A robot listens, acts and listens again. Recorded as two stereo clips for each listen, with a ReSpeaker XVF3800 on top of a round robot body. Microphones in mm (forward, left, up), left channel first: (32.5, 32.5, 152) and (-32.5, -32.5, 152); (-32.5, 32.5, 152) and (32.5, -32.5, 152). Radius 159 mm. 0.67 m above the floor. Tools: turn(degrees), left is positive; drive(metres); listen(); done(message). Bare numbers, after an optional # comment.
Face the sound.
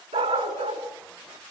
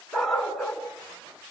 # The dog barking: 135° right.
turn(-135)
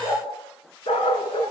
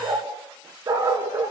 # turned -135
# The dog barking is now 20° left.
turn(20)
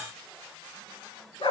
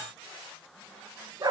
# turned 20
# The dog barking is now 10° left.
turn(10)
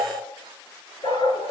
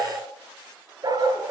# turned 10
done("Facing the dog barking.")